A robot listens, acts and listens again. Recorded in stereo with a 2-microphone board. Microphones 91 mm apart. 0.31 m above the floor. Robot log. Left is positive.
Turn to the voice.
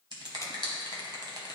cmd idle
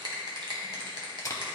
cmd idle
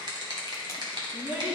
note: The child speaking: about 20° right or 160° right.
cmd yaw -20
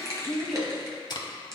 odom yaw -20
end: Found it: a child speaking, straight ahead.